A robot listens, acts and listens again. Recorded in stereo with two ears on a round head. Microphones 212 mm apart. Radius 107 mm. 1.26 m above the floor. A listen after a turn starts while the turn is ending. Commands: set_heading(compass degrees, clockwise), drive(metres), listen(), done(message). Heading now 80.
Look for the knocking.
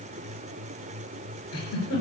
listen()
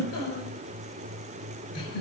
listen()
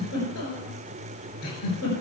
done("I can't make out knocking, only a giggle.")